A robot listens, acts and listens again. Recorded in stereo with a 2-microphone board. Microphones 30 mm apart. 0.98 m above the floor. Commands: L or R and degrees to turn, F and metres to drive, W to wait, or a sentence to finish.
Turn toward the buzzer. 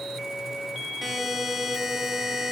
R30
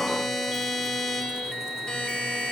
L25
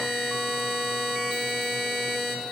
Found it: a buzzer, straight ahead.